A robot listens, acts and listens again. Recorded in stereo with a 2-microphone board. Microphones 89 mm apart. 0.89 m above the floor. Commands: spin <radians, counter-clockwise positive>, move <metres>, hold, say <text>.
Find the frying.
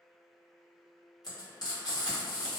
spin 0.87
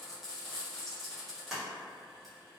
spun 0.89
say Found it: frying, straight ahead, 1 to 2 m away.